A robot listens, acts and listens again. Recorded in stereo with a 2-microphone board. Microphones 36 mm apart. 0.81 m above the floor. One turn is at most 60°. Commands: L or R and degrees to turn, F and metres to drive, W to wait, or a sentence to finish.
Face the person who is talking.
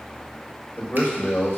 L60
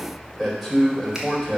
Found it: a man speaking, straight ahead.